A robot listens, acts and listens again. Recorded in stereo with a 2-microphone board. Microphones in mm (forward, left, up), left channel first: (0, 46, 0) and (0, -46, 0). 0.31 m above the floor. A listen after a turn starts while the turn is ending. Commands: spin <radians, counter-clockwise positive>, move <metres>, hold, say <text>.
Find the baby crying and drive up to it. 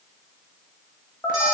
hold
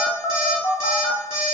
hold
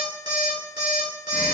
say I can't make out a baby crying to turn to.